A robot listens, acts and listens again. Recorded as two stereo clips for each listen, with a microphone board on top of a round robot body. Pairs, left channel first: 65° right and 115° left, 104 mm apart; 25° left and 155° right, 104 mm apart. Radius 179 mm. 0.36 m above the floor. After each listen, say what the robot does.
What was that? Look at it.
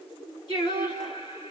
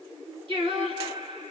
Turn 115° right.
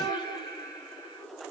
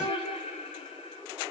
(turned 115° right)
Turn 10° right.
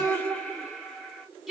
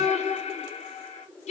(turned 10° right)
Turn 25° left.
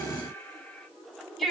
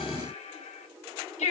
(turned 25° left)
Turn 25° left.
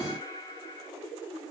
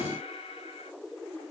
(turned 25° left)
Turn 10° right.
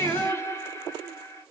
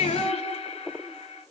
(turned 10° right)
Facing the singing, 1 to 2 m away.